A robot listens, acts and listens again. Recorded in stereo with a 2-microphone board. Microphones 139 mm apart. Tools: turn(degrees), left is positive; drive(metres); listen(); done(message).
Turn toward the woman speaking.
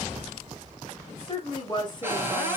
turn(degrees=30)
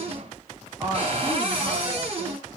turn(degrees=-15)
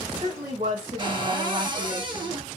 turn(degrees=-40)
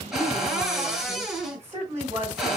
turn(degrees=-20)
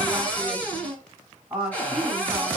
turn(degrees=-10)
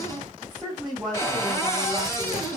done("Facing the woman speaking.")